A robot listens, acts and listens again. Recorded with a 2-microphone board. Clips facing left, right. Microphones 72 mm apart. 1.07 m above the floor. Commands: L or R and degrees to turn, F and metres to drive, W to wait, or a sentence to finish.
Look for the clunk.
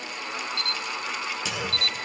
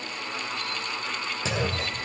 R35
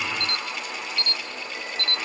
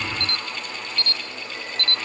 W
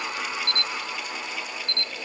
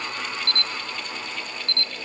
I heard a clunk, but can't make it out now. It was about straight ahead or 110° right.